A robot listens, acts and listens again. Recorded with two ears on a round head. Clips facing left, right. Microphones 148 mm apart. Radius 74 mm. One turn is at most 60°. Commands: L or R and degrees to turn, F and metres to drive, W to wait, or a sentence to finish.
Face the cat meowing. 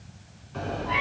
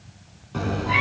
R60
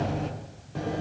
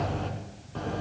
L15
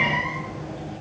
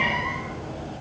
Facing the cat meowing, 2 to 4 m away.